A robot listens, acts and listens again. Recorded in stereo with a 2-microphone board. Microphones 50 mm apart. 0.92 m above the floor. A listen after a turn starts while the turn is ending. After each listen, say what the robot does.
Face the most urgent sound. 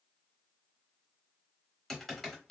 Keep listening.
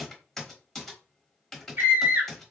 Turn 40° right.
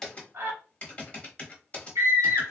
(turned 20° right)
Turn 115° right.
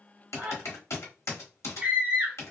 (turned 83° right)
Turn 30° right.
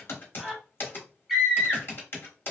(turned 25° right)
Found it: a scream, straight ahead.